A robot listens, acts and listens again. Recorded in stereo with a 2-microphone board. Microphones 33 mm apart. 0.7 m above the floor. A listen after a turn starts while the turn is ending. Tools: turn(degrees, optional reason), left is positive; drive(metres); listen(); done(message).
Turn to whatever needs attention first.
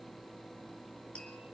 listen()
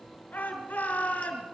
turn(degrees=55, reason="The shout: about 55° left or 125° left.")
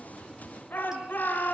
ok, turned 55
turn(degrees=65, reason="So it is at 65° left.")
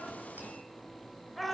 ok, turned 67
done("Found it: a shout, straight ahead, over 4 m away.")